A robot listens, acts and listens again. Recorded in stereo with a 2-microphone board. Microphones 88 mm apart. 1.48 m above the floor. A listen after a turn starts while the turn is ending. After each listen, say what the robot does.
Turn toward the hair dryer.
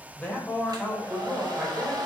Turn 50° right.
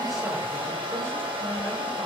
Turn 85° right.
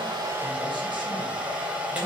Turn 15° right.
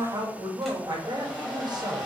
Facing the hair dryer.